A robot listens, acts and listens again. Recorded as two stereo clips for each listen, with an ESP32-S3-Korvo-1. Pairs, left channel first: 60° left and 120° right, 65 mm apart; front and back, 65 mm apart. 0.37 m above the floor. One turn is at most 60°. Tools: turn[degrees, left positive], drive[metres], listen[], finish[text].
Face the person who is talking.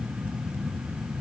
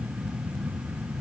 Action: listen[]
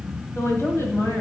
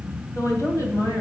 Thought: The woman speaking: 25° left.
Action: turn[25]
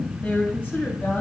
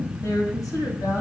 Action: finish[Facing the woman speaking.]